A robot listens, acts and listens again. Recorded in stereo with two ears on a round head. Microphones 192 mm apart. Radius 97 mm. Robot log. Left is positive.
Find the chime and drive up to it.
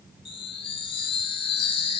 note: The chime: about 25° left or 155° left.
cmd yaw +25
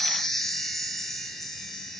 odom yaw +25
cmd fwd 1.0
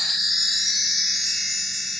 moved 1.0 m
cmd fwd 1.0
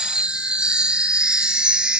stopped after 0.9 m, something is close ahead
end: Arrived at the chime, straight ahead.